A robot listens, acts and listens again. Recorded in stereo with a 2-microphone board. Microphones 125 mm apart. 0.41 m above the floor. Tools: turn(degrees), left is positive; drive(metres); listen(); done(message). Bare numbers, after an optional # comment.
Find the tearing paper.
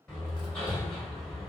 listen()
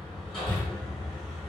listen()
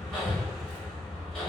done("I can't make out tearing paper to turn to.")